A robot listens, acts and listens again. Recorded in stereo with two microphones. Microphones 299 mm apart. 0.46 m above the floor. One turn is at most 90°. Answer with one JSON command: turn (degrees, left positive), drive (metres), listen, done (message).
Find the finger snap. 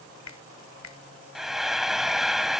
{"turn": 60}
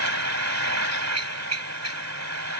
{"listen": true}
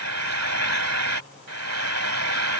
{"listen": true}
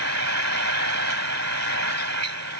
{"done": "I heard a finger snap, but can't make it out now. It was about straight ahead or 60° left."}